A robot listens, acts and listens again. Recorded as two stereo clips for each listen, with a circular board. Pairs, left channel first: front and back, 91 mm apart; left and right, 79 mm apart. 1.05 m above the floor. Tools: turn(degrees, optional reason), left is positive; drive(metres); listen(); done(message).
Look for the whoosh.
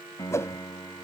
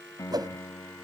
turn(degrees=-60, reason="The whoosh: 60° right.")
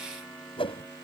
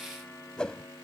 turn(degrees=10, reason="The whoosh is now 10° left.")
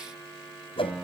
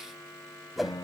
done("Facing the whoosh.")